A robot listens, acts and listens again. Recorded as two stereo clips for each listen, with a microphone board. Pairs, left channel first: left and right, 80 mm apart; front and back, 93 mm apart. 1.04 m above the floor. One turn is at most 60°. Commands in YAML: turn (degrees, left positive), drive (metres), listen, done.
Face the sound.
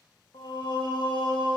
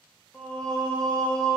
turn: 60
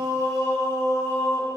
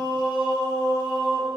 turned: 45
turn: 35
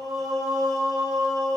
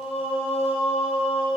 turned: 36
done: "Found it: singing, straight ahead."